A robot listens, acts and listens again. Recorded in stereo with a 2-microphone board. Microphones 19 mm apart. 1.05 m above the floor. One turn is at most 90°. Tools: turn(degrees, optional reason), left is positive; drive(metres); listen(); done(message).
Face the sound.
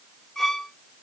turn(degrees=25, reason="The violin: about 25° left or 155° left.")
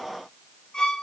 turn(degrees=90, reason="So it is at 135° left.")
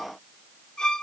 turn(degrees=45, reason="The violin is now 45° left.")
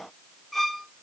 turn(degrees=10, reason="The violin is now 10° left.")
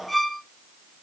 done("Found it: a violin, straight ahead.")